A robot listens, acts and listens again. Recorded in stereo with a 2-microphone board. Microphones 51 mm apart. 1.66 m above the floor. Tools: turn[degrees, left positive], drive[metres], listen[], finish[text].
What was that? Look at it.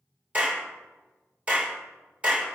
Thought: The clap: about 20° right or 160° right.
Action: turn[-20]
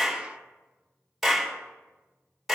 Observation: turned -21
Action: finish[Found it: a clap, straight ahead, 2 to 4 m away.]